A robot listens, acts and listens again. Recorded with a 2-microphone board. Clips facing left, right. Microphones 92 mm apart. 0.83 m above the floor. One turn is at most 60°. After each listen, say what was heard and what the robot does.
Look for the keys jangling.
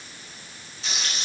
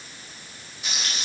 Keep listening.
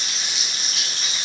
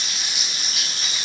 Keep listening.
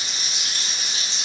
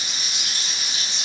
I can't make out keys jangling to turn to.